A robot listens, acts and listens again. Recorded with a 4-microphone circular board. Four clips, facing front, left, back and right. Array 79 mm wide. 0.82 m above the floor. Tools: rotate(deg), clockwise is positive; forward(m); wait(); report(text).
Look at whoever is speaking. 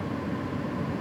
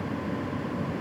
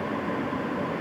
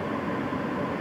wait()
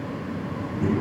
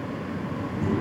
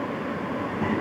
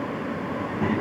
rotate(130)
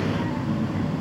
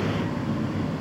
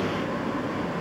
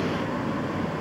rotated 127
report("Found it: a child speaking, straight ahead.")